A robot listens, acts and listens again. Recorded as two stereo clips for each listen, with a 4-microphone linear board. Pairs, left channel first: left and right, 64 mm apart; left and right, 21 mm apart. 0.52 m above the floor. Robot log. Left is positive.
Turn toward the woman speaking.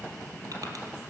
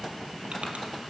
cmd idle
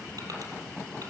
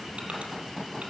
cmd idle
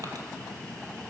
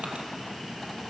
end: I can't make out a woman speaking.